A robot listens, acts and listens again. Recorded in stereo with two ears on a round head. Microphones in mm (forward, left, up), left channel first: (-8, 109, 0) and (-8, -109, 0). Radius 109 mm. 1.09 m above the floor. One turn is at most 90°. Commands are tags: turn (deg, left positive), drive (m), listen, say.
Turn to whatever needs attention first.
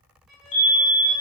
<turn deg="50"/>
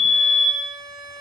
<turn deg="70"/>
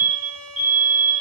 <say>Facing the fire alarm, 2 to 4 m away.</say>